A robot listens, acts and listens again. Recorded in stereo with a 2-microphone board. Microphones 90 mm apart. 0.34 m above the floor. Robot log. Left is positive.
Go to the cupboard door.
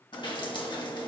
cmd idle
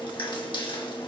cmd idle
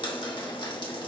end: I can't make out a cupboard door, only dripping.